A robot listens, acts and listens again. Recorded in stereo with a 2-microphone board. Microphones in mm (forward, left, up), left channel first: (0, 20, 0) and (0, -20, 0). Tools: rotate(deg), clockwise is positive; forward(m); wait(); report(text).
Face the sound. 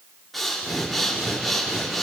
rotate(-30)
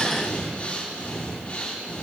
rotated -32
rotate(-145)
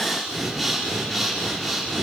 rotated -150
report("Facing the breathing, 2 to 4 m away.")